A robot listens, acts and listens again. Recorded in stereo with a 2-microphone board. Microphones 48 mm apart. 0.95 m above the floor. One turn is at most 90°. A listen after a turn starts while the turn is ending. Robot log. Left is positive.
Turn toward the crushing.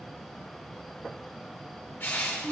note: The crushing: about 45° left or 135° left.
cmd yaw +45
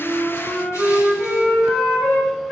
cmd idle
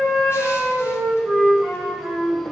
cmd idle
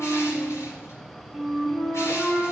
end: I heard crushing, but can't make it out now. It was about straight ahead or 90° left.